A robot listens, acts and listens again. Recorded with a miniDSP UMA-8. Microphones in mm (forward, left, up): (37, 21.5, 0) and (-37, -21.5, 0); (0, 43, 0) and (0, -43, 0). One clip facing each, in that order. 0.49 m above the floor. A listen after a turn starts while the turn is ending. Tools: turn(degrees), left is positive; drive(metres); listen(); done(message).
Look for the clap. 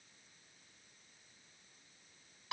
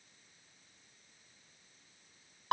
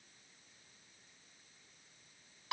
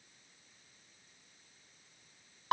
listen()
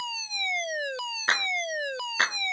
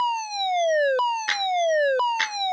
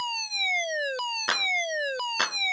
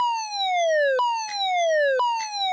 turn(degrees=90)
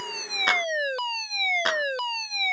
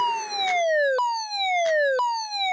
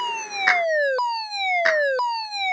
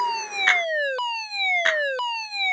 listen()
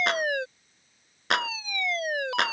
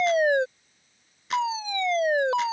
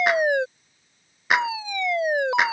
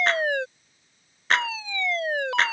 listen()
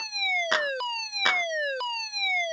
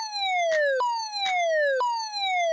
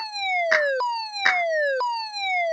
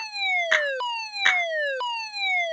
done("Facing where the clap came from. I can't hear it now.")